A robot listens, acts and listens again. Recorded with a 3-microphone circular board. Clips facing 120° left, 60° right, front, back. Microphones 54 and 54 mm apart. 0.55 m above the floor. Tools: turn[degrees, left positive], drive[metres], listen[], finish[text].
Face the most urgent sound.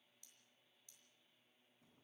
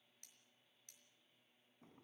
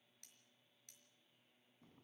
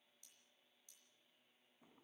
Action: listen[]
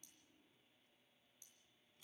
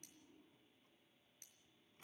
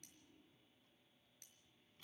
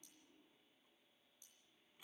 Action: listen[]
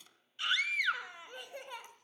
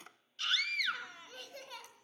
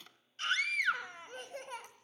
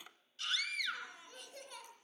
Thought: The scream: 50° left.
Action: turn[50]
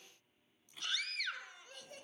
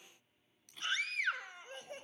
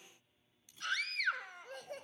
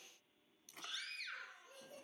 Action: finish[Found it: a scream, straight ahead, 2 to 4 m away.]